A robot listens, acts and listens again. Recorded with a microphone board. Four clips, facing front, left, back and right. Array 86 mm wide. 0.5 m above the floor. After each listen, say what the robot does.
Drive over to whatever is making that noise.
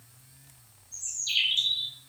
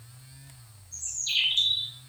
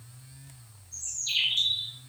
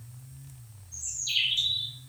Turn 125° left.
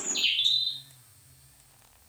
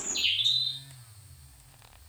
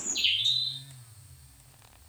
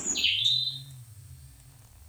Turn 20° left.
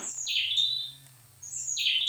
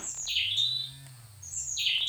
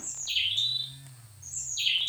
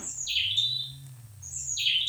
Drive 1.0 m forward.
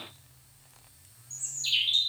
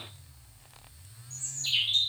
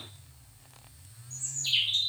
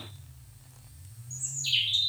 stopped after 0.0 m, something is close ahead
Something is in my way. I am facing the bird but have not reached it.